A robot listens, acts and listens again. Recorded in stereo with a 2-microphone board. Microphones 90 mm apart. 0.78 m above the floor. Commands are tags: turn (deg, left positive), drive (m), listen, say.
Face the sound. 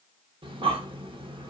<turn deg="-70"/>
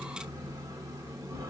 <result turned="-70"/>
<turn deg="-40"/>
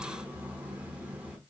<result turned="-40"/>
<turn deg="-15"/>
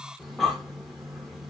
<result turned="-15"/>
<say>Facing the breathing, under 1 m away.</say>